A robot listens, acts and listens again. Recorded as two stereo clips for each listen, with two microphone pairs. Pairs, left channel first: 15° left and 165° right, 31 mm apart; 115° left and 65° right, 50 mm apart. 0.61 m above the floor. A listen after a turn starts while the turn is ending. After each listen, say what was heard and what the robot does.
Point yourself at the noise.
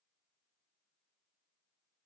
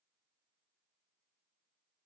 Keep listening.
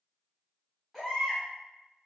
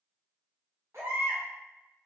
The baby crying: 75° right. Turn 75° right.
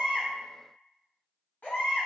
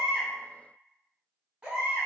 Facing the baby crying.